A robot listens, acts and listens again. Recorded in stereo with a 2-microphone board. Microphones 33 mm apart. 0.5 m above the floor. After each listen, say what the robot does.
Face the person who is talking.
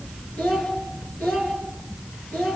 Turn 75° left.
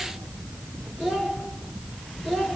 Found it: a child speaking, straight ahead.